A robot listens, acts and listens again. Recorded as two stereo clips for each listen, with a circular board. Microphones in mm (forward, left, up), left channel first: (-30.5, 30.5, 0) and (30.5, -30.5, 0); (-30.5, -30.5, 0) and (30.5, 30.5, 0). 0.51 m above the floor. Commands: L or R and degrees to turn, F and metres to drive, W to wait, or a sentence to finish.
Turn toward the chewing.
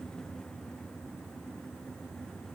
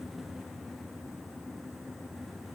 W
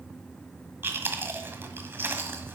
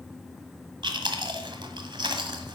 L20
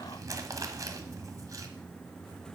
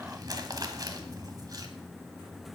Facing the chewing, 1 to 2 m away.